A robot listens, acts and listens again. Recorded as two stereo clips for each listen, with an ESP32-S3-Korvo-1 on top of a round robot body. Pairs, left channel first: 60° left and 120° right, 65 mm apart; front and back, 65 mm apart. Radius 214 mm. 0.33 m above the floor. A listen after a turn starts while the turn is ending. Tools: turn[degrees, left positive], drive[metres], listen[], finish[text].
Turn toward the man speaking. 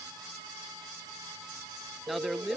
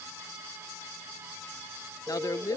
Thought: The man speaking: 30° right.
Action: turn[-30]
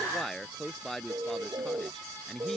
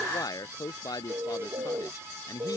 Thought: The man speaking is now 25° right.
Action: turn[-25]
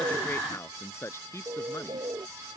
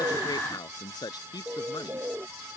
Thought: The man speaking is now 15° left.
Action: turn[15]
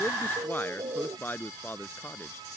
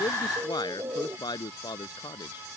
Action: finish[Facing the man speaking.]